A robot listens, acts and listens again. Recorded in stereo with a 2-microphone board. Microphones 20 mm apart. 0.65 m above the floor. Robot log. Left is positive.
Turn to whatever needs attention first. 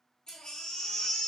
note: The baby crying: about 50° left or 130° left.
cmd yaw +50
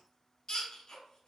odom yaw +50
note: So it is at 65° left.
cmd yaw +65
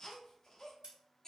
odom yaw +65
note: The baby crying is now 30° left.
cmd yaw +30
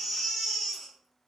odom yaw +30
note: The baby crying is now 10° left.
cmd yaw +10
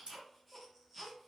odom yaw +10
end: Facing the baby crying.